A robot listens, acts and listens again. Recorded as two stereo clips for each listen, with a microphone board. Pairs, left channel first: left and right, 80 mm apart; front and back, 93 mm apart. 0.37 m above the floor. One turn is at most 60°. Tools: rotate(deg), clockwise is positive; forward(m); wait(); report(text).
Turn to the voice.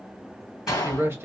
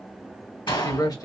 rotate(35)
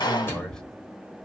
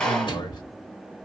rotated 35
rotate(-10)
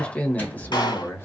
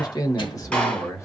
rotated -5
rotate(-40)
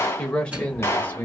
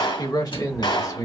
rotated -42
rotate(-30)
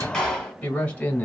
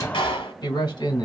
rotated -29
rotate(-20)
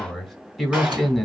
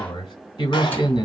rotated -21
report("Facing the man speaking.")